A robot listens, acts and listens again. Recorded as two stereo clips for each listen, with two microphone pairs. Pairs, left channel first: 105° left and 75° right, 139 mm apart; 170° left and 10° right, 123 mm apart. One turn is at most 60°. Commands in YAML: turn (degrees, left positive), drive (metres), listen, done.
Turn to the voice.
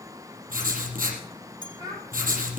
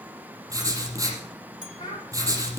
turn: -60
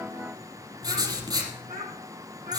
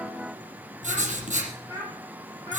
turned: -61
turn: -60
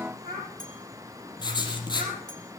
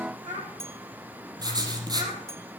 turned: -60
turn: -15
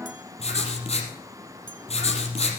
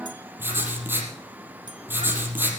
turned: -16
listen: true
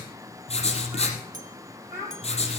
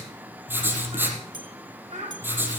done: "Found it: a child speaking, straight ahead, over 4 m away."